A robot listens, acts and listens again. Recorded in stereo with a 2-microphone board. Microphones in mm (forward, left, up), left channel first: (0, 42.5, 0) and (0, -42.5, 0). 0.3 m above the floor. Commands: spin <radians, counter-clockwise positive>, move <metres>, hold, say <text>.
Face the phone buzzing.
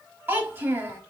hold
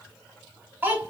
hold
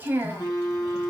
spin 0.87
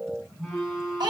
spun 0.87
say Facing the phone buzzing, 1 to 2 m away.